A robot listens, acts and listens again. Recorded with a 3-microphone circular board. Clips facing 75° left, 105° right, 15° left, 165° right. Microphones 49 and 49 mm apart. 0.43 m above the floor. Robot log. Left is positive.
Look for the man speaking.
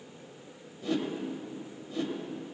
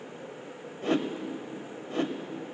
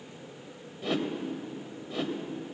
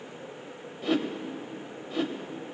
cmd idle
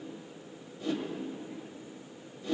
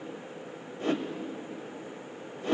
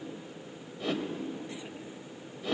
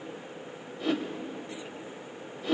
cmd idle
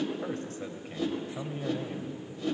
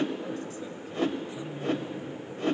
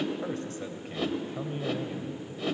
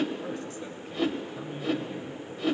note: The man speaking: 60° left.
cmd yaw +60
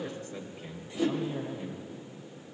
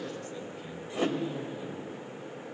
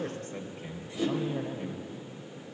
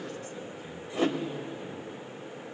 note: The man speaking is now 10° left.
cmd yaw +10
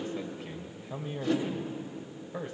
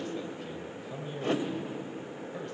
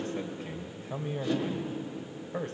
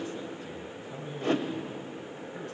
end: Found it: a man speaking, straight ahead, 2 to 4 m away.